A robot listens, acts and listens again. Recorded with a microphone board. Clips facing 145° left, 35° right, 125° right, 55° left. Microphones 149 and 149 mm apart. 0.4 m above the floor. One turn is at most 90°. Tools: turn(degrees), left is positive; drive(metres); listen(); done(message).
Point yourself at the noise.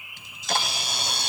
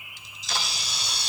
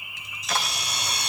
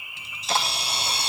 turn(degrees=90)
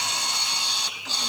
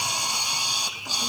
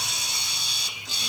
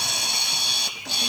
turn(degrees=45)
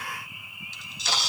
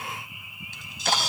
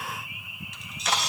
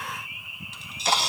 done("Found it: a camera shutter, straight ahead, 1 to 2 m away.")